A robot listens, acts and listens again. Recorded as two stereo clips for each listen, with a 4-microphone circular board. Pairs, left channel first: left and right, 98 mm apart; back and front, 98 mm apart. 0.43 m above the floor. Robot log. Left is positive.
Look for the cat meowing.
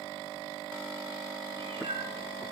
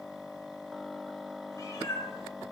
note: The cat meowing: 120° right.
cmd yaw -120
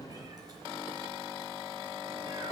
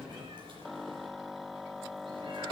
note: The cat meowing is now 35° right.
cmd yaw -35
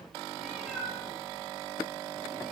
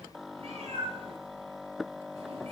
end: Facing the cat meowing, over 4 m away.